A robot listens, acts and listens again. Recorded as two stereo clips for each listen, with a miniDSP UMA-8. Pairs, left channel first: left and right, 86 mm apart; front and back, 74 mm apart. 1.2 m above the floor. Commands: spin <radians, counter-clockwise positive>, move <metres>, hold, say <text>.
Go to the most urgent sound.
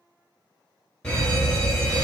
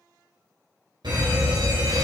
spin 2.97
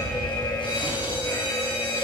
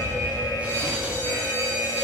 spin 0.96
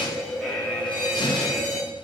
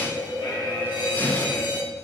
spin 0.17
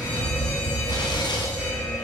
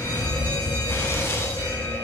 move 1.0
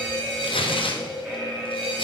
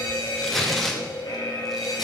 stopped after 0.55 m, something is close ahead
say Something is in my way. I am facing the fire alarm but have not reached it.